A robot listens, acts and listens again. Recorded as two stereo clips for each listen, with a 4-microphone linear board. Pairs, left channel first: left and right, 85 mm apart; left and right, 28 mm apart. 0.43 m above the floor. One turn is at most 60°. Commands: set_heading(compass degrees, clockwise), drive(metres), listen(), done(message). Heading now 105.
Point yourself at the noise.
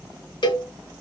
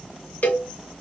set_heading(45)
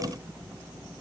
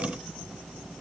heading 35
listen()
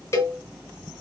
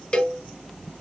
set_heading(355)
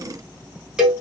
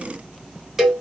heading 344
set_heading(354)
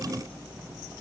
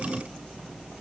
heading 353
listen()
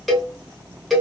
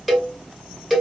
done("Facing the cowbell.")